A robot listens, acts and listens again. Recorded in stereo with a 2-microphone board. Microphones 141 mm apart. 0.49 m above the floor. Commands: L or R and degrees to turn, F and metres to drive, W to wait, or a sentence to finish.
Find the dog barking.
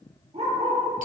R50
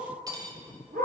R90
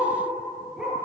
Facing the dog barking.